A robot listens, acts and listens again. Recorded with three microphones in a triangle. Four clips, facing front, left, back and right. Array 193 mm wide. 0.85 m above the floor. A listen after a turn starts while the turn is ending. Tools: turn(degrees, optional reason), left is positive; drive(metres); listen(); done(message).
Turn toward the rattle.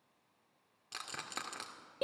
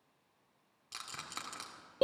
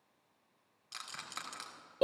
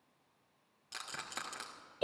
turn(degrees=-25, reason="The rattle: 25° right.")
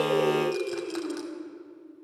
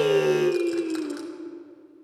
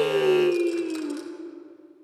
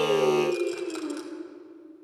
done("Facing the rattle.")